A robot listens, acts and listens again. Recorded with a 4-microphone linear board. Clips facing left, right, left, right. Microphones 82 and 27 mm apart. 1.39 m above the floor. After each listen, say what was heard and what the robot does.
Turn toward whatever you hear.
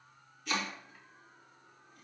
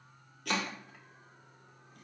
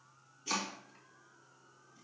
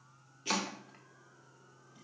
The chopping: about 65° right or 115° right. Turn 65° right.
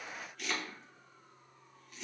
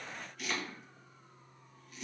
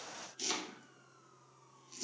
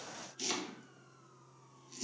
Found it: chopping, straight ahead, 1 to 2 m away.